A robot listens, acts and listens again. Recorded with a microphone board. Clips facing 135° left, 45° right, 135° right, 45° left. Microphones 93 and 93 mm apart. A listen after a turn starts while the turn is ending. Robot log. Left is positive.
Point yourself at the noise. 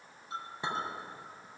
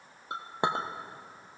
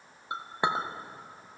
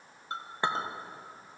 note: The clink: 60° right.
cmd yaw -60
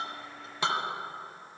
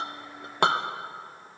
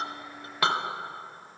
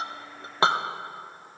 note: The clink is now 15° right.
cmd yaw -15
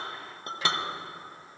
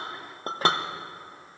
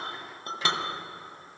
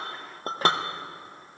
end: Facing the clink, under 1 m away.